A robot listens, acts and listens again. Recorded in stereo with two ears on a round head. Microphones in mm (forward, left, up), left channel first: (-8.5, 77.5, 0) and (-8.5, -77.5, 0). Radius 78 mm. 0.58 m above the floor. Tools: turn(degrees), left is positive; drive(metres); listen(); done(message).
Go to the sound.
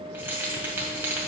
turn(degrees=-30)
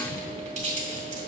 turn(degrees=-135)
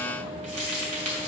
turn(degrees=-45)
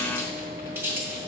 turn(degrees=-15)
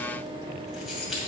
listen()
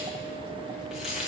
listen()
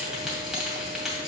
drive(metres=1.0)
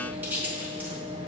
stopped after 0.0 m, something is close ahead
turn(degrees=-10)
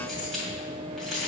done("Something is in my way. I am facing the keys jangling but have not reached it.")